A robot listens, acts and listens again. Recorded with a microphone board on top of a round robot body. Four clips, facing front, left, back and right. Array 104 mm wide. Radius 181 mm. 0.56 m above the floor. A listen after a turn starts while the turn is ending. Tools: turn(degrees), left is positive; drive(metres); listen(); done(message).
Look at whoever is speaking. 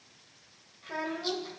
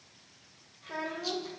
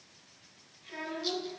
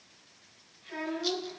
turn(degrees=35)
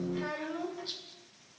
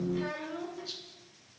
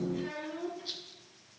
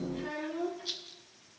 turn(degrees=35)
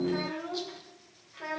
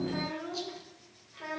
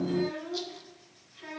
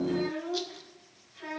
turn(degrees=25)
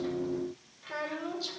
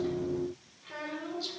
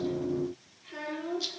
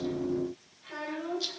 done("Found it: a child speaking, straight ahead.")